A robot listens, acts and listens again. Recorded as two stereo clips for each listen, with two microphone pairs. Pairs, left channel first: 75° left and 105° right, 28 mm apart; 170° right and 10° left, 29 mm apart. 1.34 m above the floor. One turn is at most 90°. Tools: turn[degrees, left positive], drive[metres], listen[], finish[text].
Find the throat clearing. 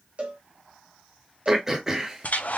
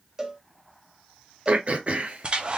Thought: The throat clearing: 30° right.
Action: turn[-30]
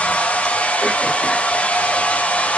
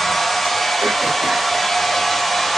Action: listen[]
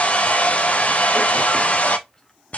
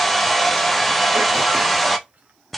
Action: listen[]
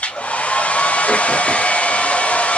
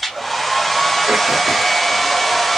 Action: finish[Facing where the throat clearing came from. I can't hear it now.]